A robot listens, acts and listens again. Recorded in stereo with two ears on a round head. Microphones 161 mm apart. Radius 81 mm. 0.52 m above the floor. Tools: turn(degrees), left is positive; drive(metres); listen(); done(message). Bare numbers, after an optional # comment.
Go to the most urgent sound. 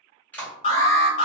# The alarm: about 35° left or 145° left.
turn(35)
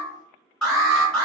drive(1.0)
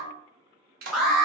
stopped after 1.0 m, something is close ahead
done("I am next to the alarm.")